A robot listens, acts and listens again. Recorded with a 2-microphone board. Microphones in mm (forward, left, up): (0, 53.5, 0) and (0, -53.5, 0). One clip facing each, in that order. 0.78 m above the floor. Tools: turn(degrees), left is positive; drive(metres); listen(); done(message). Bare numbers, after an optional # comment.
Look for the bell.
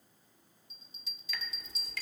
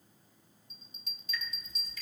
# The bell: about 50° right or 130° right.
turn(-50)
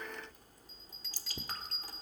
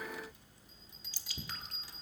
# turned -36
# So it is at 20° right.
turn(-20)
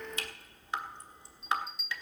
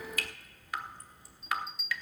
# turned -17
done("Facing the bell, 1 to 2 m away.")